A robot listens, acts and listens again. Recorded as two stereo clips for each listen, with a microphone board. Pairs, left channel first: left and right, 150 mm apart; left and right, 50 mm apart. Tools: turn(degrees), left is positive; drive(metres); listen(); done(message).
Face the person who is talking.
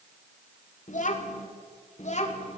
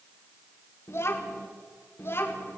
turn(degrees=50)
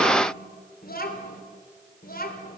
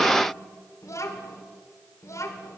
turn(degrees=80)
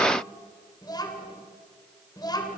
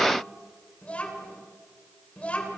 turn(degrees=25)
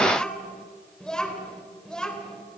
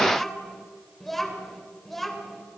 done("Found it: a child speaking, straight ahead.")